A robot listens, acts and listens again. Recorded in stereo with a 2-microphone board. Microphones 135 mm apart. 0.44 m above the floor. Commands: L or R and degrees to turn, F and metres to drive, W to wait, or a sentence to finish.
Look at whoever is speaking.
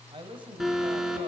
R40
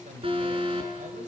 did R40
R100
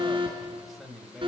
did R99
Found it: a man speaking, straight ahead, 2 to 4 m away.